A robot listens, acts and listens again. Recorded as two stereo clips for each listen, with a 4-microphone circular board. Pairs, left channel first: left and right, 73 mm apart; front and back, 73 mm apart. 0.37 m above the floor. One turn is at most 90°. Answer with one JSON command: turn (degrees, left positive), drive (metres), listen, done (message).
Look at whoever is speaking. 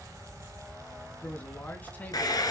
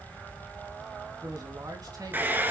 {"turn": 90}
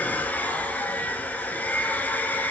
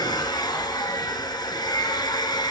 {"turn": 65}
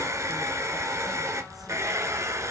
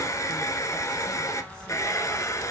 {"listen": true}
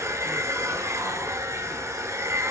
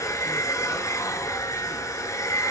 {"done": "Facing where the man speaking came from. I can't hear it now."}